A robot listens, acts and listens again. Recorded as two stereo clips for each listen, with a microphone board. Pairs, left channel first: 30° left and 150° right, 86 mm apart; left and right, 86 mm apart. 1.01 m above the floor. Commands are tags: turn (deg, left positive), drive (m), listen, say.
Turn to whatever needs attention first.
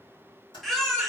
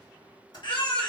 <turn deg="115"/>
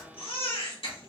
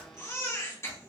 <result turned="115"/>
<turn deg="30"/>
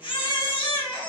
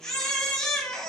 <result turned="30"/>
<say>Found it: a baby crying, straight ahead, 1 to 2 m away.</say>